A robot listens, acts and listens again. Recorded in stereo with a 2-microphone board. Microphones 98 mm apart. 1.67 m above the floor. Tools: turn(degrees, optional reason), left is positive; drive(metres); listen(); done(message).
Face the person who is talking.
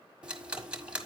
listen()
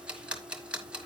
listen()
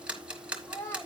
turn(degrees=25, reason="The child speaking: about 25° left or 155° left.")
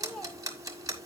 done("Facing the child speaking.")